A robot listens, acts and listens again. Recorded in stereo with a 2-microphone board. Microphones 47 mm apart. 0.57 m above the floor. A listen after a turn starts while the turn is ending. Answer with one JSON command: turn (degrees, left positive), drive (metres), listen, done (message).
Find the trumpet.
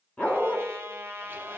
{"turn": -55}
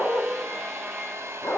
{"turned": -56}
{"listen": true}
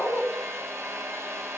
{"listen": true}
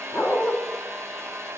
{"done": "I heard a trumpet, but can't make it out now. It was about straight ahead or 70° right."}